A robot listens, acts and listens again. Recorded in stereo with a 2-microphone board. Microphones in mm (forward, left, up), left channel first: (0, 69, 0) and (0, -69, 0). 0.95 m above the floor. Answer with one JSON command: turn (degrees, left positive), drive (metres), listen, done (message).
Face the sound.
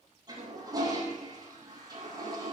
{"turn": -30}
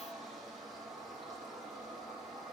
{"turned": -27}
{"done": "Found it: a toilet flushing, straight ahead, over 4 m away."}